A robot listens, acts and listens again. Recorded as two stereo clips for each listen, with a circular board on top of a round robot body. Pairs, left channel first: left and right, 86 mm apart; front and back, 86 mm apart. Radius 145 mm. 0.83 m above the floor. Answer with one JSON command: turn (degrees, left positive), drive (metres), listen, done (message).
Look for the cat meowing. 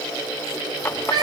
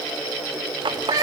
{"turn": -130}
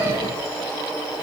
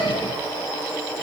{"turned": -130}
{"turn": -30}
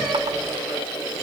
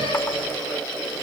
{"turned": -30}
{"listen": true}
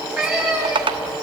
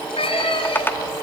{"done": "Found it: a cat meowing, straight ahead, over 4 m away."}